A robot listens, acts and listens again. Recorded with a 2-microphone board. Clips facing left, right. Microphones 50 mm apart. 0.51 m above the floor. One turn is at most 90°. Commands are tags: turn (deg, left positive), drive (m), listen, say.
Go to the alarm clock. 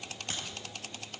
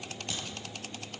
<listen/>
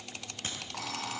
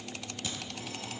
<turn deg="90"/>
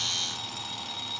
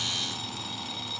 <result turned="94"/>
<drive m="1.0"/>
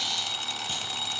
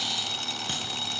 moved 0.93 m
<drive m="1.0"/>
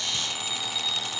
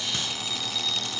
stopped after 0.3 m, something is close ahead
<turn deg="10"/>
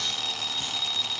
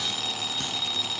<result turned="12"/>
<say>I am next to the alarm clock.</say>